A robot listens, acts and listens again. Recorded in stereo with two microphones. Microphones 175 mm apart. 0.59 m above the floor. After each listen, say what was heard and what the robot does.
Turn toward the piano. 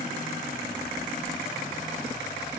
Keep listening.
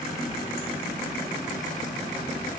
Keep listening.
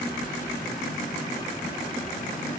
I can't make out a piano, only a running tap.